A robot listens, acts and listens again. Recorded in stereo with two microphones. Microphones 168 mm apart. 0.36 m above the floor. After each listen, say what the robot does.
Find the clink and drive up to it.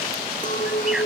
Turn 50° left.
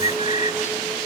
Keep listening.
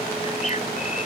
Keep listening.
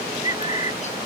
I heard a clink, but can't make it out now. It was about straight ahead or 80° left. I did not reach it.